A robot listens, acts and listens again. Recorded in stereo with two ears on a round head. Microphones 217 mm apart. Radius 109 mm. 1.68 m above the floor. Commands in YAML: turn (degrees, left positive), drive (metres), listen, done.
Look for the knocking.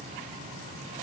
listen: true
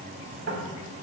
turn: -55
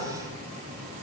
listen: true
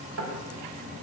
turn: -65
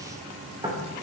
turn: -20
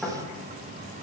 done: "Facing the knocking, 2 to 4 m away."